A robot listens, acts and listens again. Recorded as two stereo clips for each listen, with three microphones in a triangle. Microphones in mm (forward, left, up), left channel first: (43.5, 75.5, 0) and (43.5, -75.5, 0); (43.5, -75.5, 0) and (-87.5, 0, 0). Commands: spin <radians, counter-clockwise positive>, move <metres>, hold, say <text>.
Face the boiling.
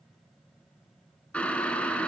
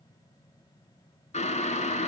spin 0.17
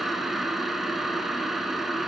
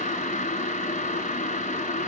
say Facing the boiling.